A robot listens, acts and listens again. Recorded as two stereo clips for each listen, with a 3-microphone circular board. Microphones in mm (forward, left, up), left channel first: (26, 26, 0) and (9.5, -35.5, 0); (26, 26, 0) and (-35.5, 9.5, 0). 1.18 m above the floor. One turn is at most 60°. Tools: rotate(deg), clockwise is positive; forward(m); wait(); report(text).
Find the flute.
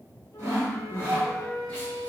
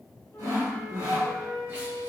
rotate(-60)
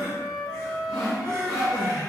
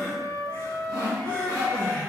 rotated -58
report("Facing the flute.")